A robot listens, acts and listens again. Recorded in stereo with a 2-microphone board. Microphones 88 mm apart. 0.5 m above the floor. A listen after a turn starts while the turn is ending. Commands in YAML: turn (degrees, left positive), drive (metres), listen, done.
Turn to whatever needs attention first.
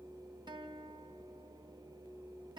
listen: true
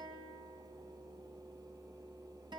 listen: true
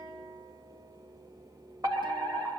turn: -45
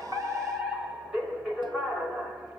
turn: -10
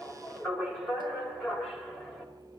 done: "Facing the fire alarm, over 4 m away."